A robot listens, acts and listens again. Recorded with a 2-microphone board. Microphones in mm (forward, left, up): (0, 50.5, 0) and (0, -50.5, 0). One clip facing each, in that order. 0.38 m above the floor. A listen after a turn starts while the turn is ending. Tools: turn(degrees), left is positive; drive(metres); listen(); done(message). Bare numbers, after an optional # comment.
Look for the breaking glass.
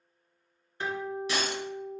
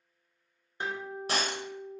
# The breaking glass: about 45° right or 135° right.
turn(-45)
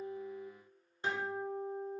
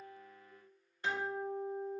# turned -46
listen()
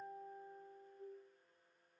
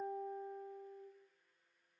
done("I heard breaking glass, but can't make it out now. It was about straight ahead or 90° right.")